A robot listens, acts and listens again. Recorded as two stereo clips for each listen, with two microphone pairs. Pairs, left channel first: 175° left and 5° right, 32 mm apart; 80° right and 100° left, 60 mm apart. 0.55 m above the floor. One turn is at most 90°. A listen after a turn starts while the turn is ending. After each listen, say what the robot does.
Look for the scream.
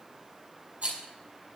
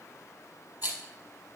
Keep listening.
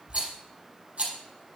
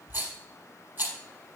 Keep listening.
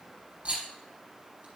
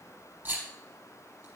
I can't make out a scream to turn to.